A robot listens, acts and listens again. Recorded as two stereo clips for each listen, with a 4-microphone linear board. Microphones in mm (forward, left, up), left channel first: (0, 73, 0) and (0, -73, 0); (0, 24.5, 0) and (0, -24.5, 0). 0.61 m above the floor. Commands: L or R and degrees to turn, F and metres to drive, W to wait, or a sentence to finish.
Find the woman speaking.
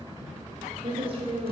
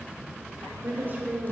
R40
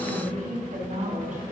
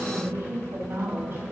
R120
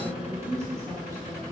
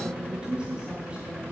R20
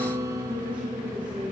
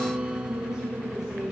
W
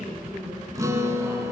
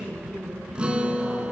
R10
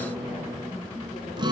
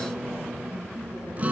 W
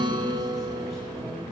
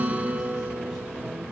W
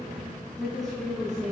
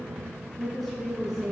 Facing the woman speaking, over 4 m away.